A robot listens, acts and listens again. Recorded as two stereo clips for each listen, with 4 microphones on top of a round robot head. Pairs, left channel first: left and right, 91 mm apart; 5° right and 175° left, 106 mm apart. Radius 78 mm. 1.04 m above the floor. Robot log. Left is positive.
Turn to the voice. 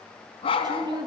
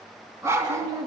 note: The woman speaking: 130° right.
cmd yaw -130
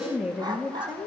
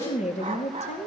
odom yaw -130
note: The woman speaking is now 10° right.
cmd yaw -10
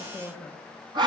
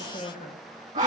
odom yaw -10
end: Facing the woman speaking.